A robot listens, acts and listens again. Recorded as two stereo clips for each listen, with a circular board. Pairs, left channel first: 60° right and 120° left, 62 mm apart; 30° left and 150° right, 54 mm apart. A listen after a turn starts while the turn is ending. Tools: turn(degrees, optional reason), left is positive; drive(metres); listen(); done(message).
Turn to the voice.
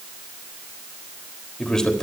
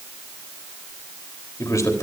turn(degrees=25, reason="The man speaking: 25° left.")
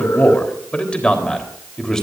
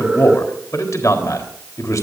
turn(degrees=20, reason="The man speaking is now 20° left.")
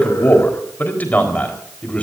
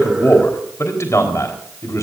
turn(degrees=10, reason="The man speaking is now 10° left.")
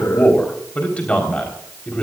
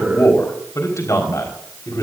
turn(degrees=15, reason="The man speaking is now 15° left.")
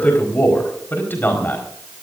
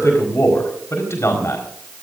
done("Found it: a man speaking, straight ahead.")